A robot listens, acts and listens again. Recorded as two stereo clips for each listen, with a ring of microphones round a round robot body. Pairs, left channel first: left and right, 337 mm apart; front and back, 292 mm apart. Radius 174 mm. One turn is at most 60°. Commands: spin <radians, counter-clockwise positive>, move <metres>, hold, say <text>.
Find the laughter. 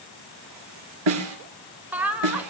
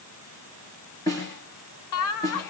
say Found it: laughter, straight ahead.